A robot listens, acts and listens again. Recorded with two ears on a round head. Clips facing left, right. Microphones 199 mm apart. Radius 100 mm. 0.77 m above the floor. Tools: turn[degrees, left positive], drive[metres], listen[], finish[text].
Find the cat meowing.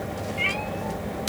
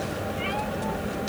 Thought: The cat meowing: about 35° left or 145° left.
Action: turn[35]
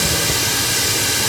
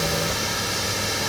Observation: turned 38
Action: listen[]
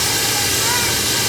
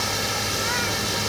Action: listen[]
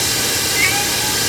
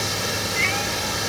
Action: finish[I heard a cat meowing, but can't make it out now. It was about straight ahead or 105° left.]